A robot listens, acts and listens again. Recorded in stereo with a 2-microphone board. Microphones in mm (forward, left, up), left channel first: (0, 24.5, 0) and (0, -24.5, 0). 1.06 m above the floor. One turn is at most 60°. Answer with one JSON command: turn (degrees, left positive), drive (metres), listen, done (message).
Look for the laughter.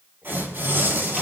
{"listen": true}
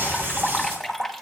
{"listen": true}
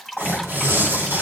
{"done": "I can't make out laughter to turn to."}